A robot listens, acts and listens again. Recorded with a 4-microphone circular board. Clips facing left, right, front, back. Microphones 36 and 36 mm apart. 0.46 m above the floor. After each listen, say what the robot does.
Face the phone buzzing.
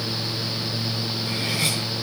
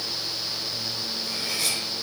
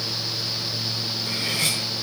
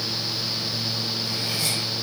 Keep listening.
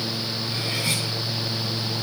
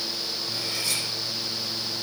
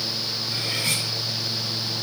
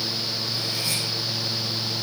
Keep listening.
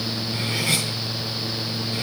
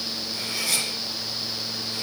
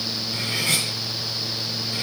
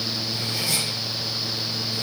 I can't make out a phone buzzing.